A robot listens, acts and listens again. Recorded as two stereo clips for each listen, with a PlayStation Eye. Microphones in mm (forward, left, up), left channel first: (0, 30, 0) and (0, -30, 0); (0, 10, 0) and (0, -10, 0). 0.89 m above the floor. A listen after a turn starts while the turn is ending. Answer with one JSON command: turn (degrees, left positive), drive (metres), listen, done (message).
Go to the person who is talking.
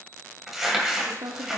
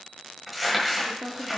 {"turn": -65}
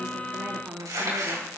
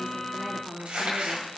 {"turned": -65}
{"turn": -35}
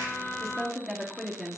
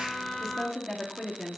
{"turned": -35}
{"drive": 1.0}
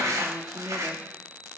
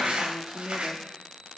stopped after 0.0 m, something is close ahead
{"done": "Blocked. The woman speaking is further on, straight ahead."}